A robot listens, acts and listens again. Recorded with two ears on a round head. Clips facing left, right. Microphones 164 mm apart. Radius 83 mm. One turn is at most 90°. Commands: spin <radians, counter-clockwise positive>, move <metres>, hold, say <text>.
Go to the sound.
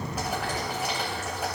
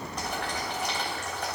spin 0.52
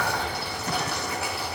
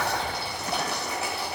spin -0.35
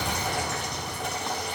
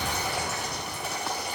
move 1.0
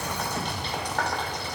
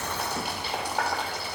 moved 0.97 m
spin -0.17
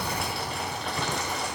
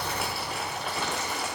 move 1.0
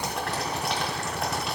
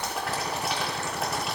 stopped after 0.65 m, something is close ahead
say Arrived at the boiling, straight ahead.